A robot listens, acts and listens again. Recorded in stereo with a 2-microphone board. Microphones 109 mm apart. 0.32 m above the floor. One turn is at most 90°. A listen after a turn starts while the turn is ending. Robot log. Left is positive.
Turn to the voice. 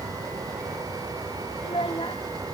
note: The child speaking: about 60° left or 120° left.
cmd yaw +60
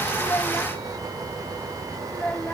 note: So it is at 15° left.
cmd yaw +15
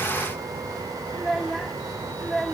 end: Found it: a child speaking, straight ahead.